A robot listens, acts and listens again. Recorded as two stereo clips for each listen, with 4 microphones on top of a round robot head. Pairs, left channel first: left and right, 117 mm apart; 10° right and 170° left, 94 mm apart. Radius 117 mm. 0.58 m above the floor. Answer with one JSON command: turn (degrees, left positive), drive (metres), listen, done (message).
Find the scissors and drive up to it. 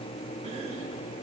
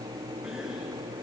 {"listen": true}
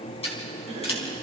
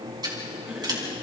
{"turn": 125}
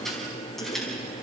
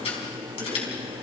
{"drive": 1.0}
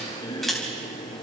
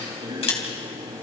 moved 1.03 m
{"drive": 1.0}
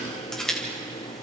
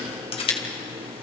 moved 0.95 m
{"drive": 1.0}
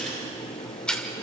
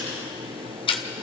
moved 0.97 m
{"drive": 1.0}
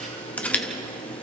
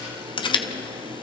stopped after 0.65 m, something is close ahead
{"turn": 10}
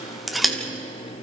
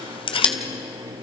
{"done": "I am next to the scissors."}